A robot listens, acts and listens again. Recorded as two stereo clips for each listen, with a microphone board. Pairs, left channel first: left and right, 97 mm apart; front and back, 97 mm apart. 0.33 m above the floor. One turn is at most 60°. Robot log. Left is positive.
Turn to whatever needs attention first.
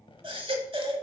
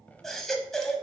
note: The baby crying: 85° right.
cmd yaw -60
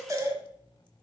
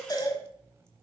note: The baby crying is now 35° right.
cmd yaw -35
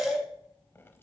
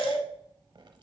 end: Found it: a baby crying, straight ahead, 1 to 2 m away.